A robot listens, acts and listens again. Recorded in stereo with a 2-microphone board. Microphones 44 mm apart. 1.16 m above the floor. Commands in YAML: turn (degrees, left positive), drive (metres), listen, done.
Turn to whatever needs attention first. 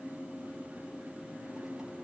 listen: true
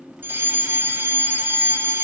turn: -55
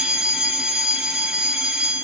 turn: -15
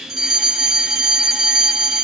done: "Found it: a fire alarm, straight ahead."